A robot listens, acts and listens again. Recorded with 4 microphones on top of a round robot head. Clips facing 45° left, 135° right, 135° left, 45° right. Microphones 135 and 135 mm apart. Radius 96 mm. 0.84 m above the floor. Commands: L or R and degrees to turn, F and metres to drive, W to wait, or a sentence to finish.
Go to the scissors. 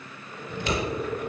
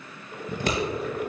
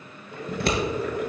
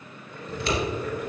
L175
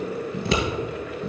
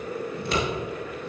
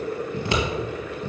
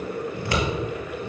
L65
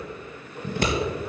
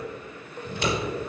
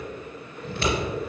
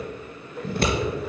F1.0
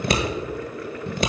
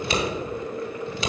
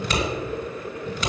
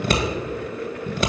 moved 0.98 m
F1.0
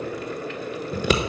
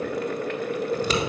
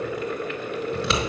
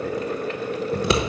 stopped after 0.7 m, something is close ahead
I am next to the scissors.